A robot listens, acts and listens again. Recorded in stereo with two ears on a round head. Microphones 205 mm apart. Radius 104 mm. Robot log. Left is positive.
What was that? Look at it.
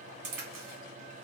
note: The crack: about 60° right or 120° right.
cmd yaw -60
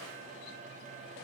cmd idle
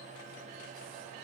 end: I heard a crack, but can't make it out now. It was about straight ahead or 60° right.